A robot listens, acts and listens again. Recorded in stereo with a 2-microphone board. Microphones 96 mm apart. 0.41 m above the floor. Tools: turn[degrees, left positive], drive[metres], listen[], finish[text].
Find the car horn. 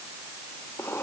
Action: listen[]
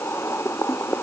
Action: listen[]
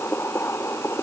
Action: finish[I can't make out a car horn, only boiling.]